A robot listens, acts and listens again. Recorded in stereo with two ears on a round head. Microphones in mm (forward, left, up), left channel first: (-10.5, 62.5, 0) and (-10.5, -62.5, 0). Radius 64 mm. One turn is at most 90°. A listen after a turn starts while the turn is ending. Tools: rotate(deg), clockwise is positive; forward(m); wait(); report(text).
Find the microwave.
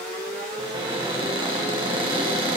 wait()
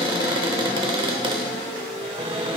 wait()
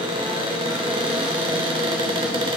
report("I can't make out a microwave, only a cupboard door.")